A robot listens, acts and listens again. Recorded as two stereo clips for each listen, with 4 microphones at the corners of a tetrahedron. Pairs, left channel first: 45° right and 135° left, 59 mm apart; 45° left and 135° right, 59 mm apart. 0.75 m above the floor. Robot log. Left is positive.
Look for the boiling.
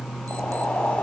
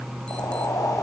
note: The boiling: 25° left.
cmd yaw +25
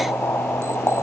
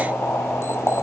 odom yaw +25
end: Facing the boiling.